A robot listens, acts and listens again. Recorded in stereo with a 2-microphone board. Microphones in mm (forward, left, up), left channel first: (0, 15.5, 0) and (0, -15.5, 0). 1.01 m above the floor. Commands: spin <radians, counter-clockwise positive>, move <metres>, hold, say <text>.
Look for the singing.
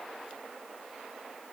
hold
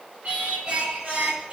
spin -0.79
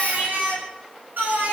spin -1.57
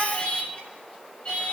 spin 0.61
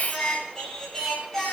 spin 0.17
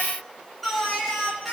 say Facing the singing.